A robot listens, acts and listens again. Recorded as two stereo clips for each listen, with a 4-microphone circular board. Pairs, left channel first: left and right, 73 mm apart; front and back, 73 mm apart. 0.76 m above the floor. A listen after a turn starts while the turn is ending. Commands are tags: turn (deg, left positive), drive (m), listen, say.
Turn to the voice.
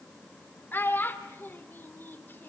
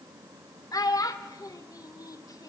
<turn deg="30"/>
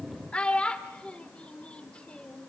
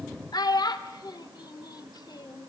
<turn deg="15"/>
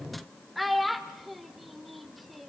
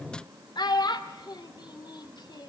<say>Found it: a child speaking, straight ahead, 1 to 2 m away.</say>